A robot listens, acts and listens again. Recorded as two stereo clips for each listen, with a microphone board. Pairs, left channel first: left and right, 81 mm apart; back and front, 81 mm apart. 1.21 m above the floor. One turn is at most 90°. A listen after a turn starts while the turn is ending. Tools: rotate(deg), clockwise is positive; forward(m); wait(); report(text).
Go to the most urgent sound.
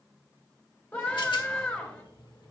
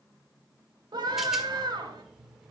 rotate(-25)
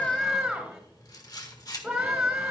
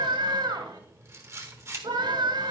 rotate(10)
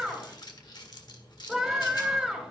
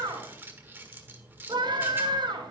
forward(1.0)
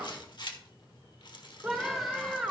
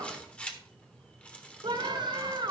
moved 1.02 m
forward(1.0)
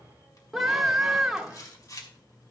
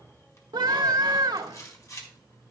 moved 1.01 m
forward(1.0)
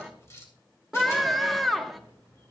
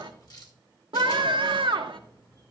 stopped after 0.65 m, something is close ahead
report("I am next to the scream.")